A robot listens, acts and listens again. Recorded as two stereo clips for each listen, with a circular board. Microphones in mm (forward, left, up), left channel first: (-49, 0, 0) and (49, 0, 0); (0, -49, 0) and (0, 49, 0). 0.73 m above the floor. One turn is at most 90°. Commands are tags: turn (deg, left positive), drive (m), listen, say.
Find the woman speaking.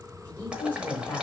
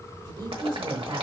<turn deg="90"/>
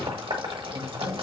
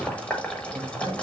<turn deg="20"/>
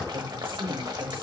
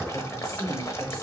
<say>Facing the woman speaking, 1 to 2 m away.</say>